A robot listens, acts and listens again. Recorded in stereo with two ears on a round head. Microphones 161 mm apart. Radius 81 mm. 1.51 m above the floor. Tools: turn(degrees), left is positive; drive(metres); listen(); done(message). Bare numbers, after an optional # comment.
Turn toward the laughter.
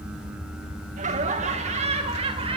# The laughter: about 30° right or 150° right.
turn(-30)
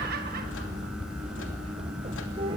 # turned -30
# The laughter: about 30° right or 150° right.
turn(-30)
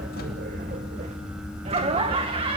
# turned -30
# The laughter: about 30° right or 150° right.
turn(-30)
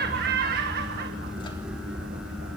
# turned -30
# So it is at 120° right.
turn(-120)
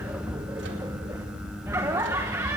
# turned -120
# The laughter is now 15° right.
turn(-15)
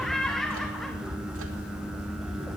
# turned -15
done("Found it: laughter, straight ahead.")